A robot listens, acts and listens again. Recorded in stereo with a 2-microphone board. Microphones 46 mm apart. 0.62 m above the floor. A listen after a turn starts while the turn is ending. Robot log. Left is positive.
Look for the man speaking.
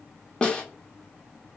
cmd idle
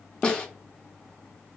cmd idle
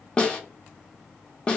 end: I can't make out a man speaking to turn to.